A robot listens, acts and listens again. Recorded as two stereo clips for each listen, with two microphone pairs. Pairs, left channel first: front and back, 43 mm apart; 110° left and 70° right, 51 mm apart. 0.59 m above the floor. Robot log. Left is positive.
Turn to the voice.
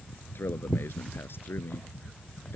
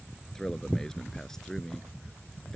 note: The man speaking: 25° left.
cmd yaw +25
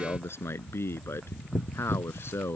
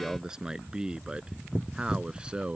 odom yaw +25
end: Facing the man speaking.